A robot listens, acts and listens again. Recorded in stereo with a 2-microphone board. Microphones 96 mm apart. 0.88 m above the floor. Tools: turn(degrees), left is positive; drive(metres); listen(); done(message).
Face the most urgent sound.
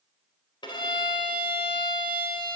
listen()
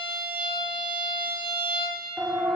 turn(degrees=-30)
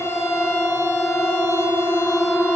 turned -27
turn(degrees=15)
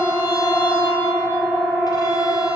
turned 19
done("Found it: a siren, straight ahead, 2 to 4 m away.")